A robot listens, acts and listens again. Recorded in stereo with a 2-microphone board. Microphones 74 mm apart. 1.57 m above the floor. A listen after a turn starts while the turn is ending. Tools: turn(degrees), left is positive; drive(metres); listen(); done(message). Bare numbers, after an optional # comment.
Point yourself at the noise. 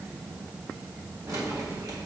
# The keys jangling: about 55° right or 125° right.
turn(-55)
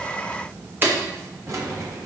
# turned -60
# So it is at 50° right.
turn(-50)
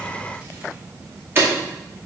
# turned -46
# The keys jangling is now 30° right.
turn(-30)
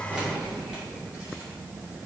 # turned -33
# The keys jangling is now 10° right.
turn(-10)
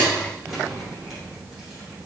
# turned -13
done("Facing the keys jangling, 2 to 4 m away.")